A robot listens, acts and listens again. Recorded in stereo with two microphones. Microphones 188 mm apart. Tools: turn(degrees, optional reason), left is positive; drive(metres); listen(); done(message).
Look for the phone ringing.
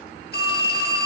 turn(degrees=55, reason="The phone ringing: about 55° left or 125° left.")
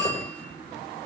done("Found it: a phone ringing, straight ahead, over 4 m away.")